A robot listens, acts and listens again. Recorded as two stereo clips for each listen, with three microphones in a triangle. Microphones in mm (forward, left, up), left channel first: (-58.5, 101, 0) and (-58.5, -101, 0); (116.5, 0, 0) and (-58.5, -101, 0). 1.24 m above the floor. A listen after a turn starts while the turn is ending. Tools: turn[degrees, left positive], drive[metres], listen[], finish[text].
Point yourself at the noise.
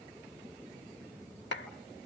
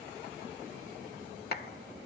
Thought: The clap: 65° left.
Action: turn[65]
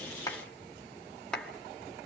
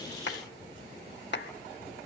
Action: finish[Found it: a clap, straight ahead, 1 to 2 m away.]